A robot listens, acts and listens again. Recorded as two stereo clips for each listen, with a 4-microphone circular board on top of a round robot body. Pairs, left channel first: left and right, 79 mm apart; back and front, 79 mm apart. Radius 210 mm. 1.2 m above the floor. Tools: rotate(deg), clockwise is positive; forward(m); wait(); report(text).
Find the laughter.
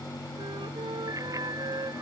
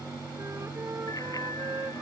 wait()
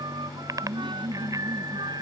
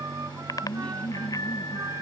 rotate(105)
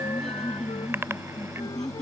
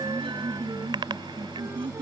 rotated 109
report("Facing the laughter.")